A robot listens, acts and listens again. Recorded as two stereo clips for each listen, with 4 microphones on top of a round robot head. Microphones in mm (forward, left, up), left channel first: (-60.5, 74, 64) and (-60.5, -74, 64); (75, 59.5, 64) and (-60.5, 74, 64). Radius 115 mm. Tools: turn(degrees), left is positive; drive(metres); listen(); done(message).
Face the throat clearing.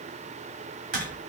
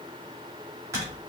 listen()
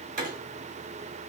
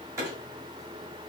listen()
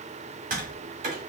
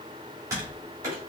done("I can't make out throat clearing to turn to.")